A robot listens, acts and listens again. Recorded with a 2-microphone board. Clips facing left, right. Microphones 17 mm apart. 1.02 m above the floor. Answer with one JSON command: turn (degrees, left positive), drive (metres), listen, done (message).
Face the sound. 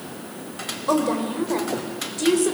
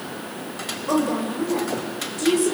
{"turn": 25}
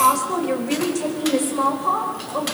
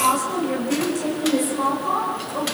{"turn": 30}
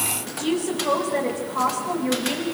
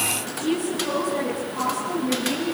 {"turn": 125}
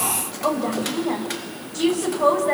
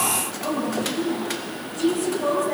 {"turn": 70}
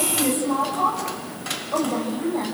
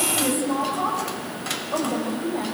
{"done": "Found it: a woman speaking, straight ahead, over 4 m away."}